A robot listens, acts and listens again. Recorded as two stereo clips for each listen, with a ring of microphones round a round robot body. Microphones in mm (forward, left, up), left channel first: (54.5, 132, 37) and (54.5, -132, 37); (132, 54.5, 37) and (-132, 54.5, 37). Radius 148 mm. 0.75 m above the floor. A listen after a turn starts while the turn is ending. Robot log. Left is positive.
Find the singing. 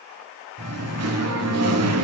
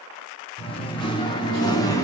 note: The singing: 75° right.
cmd yaw -75
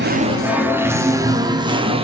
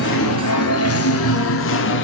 note: The singing is now 30° right.
cmd yaw -30
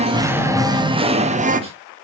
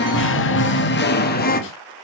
note: The singing is now 45° right.
cmd yaw -45
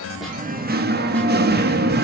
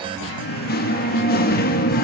note: The singing is now 50° right.
cmd yaw -50
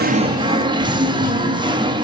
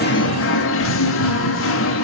note: The singing is now 20° right.
cmd yaw -20
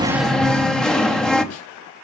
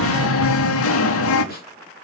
end: Facing the singing, 1 to 2 m away.